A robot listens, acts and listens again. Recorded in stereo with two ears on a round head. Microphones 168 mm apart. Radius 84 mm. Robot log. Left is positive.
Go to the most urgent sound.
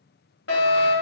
note: The fire alarm: about 65° left or 115° left.
cmd yaw +65
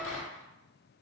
cmd idle
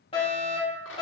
note: So it is at 30° left.
cmd yaw +30
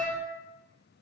note: The fire alarm is now 15° left.
cmd yaw +15
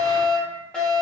cmd fwd 1.0
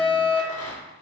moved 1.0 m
note: The fire alarm is now 10° left.
cmd yaw +10
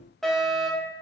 cmd fwd 1.0
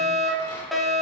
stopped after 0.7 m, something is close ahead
end: Arrived at the fire alarm, straight ahead.